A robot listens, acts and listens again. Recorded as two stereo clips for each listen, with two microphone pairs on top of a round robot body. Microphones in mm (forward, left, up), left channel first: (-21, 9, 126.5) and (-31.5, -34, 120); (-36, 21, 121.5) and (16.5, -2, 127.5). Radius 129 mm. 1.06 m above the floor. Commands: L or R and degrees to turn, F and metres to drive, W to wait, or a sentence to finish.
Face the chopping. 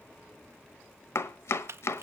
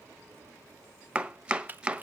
L50
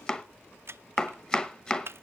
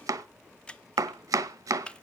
Facing the chopping, 1 to 2 m away.